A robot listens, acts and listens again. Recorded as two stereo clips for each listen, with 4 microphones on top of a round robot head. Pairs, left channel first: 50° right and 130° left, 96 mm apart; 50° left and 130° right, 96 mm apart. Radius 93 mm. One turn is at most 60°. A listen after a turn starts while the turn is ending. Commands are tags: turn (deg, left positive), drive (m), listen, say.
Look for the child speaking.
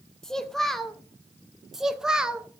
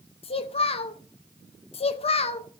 <turn deg="50"/>
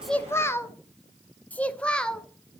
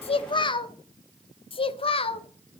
<turn deg="35"/>
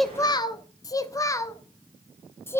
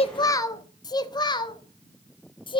<turn deg="15"/>
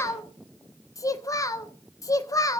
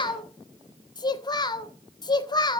<say>Found it: a child speaking, straight ahead.</say>